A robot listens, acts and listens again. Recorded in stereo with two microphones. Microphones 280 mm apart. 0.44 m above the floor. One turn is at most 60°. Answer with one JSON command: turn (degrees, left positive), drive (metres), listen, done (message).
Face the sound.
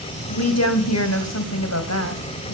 {"turn": 60}
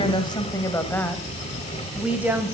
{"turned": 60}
{"turn": -10}
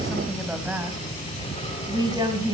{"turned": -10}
{"turn": -15}
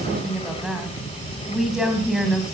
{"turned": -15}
{"done": "Found it: a woman speaking, straight ahead, 2 to 4 m away."}